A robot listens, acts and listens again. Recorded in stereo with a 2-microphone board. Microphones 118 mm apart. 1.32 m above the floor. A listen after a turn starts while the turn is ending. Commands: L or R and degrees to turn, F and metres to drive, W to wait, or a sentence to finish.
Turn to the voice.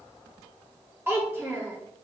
R20
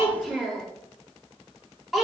Facing the child speaking.